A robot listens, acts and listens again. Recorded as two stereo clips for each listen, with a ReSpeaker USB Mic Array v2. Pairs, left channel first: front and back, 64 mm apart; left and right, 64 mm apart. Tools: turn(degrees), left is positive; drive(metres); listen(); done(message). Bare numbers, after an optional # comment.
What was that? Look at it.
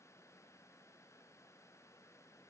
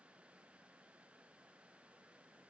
listen()
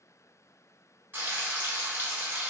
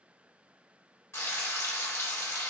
# The frying: 130° left.
turn(130)
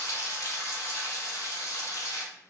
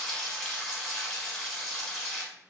# The frying is now 10° left.
turn(10)
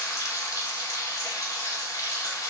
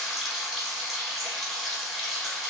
done("Found it: frying, straight ahead.")